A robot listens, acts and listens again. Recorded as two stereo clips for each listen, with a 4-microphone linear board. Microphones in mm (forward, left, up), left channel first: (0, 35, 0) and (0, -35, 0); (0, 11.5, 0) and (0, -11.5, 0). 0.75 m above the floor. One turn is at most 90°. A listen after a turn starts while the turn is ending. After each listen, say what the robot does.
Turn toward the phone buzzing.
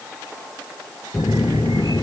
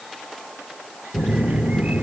Turn 65° left.
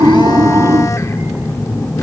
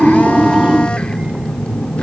Turn 45° left.
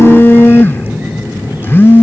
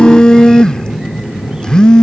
Turn 30° left.
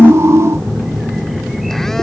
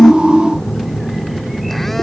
Found it: a phone buzzing, straight ahead.